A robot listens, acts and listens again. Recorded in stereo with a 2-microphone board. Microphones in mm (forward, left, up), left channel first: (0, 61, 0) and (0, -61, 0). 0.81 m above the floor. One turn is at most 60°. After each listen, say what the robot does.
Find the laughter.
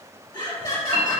Turn 25° left.
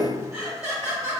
Turn 15° right.
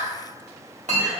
Turn 10° right.
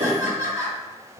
Turn 30° right.
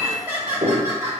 Turn 30° right.
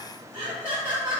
Turn 25° right.
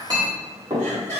Facing the laughter, 1 to 2 m away.